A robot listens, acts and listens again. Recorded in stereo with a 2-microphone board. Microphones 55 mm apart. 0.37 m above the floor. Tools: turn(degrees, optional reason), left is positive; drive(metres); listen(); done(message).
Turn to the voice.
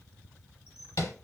listen()
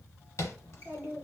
turn(degrees=-45, reason="The child speaking: about 45° right or 135° right.")
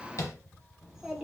turn(degrees=-10, reason="So it is at 10° right.")
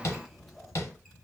done("Facing the child speaking, under 1 m away.")